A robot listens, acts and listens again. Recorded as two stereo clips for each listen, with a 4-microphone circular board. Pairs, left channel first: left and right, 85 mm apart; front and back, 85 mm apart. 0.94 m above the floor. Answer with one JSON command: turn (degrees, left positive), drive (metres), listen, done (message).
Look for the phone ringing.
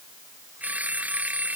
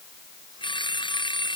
{"turn": -15}
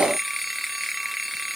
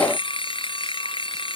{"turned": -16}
{"done": "Facing the phone ringing."}